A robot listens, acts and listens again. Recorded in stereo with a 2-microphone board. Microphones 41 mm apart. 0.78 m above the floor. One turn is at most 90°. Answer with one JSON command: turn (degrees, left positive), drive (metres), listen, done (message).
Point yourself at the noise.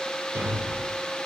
{"turn": -90}
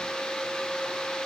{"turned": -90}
{"done": "I heard a thud from this way, but can't make it out now."}